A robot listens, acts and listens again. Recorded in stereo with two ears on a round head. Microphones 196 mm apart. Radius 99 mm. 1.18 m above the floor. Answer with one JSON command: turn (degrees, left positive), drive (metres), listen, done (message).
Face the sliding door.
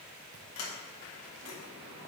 {"turn": 70}
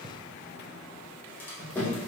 {"turn": 10}
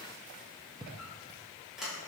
{"done": "Facing the sliding door, 1 to 2 m away."}